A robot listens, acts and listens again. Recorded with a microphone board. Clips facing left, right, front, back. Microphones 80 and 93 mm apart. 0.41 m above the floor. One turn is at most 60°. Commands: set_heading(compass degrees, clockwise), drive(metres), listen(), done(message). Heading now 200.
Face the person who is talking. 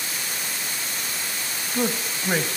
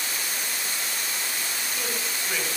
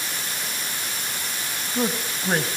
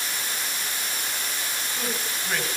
set_heading(150)
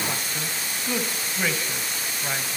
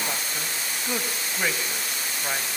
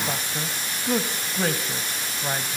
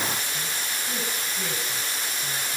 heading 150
set_heading(160)
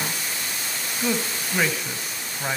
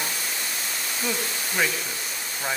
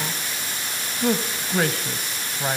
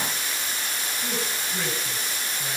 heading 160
done("Found it: a man speaking, straight ahead, 2 to 4 m away.")